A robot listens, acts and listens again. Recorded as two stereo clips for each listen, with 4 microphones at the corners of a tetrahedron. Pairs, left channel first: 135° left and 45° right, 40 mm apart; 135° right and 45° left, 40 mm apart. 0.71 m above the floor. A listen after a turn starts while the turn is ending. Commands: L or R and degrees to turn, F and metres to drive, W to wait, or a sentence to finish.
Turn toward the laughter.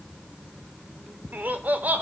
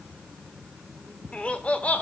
R85
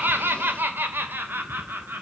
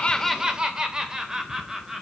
R35
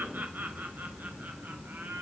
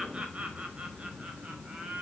R20
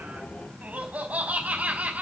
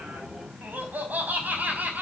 Found it: laughter, straight ahead.